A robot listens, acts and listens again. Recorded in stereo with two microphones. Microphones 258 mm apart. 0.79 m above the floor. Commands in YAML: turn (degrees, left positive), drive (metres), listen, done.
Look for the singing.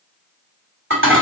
listen: true
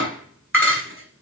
listen: true
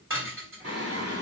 turn: -65
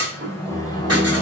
turn: 20
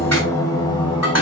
turn: 20
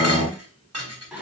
done: "Facing the singing."